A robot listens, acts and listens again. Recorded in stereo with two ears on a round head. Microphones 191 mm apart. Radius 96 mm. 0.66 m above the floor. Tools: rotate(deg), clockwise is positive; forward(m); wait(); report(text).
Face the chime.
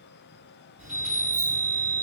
rotate(30)
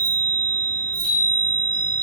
rotate(-25)
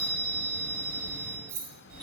rotate(20)
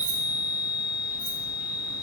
report("Facing the chime.")